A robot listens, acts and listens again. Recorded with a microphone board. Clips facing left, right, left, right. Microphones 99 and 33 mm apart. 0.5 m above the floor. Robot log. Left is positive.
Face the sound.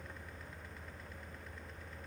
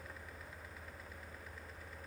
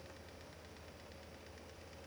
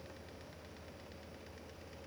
cmd idle
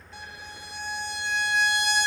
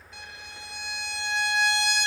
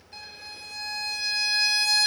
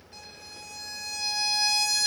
note: The violin: about 40° left or 140° left.
cmd yaw +40
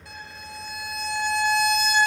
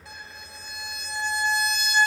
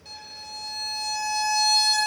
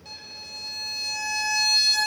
end: Facing the violin, 1 to 2 m away.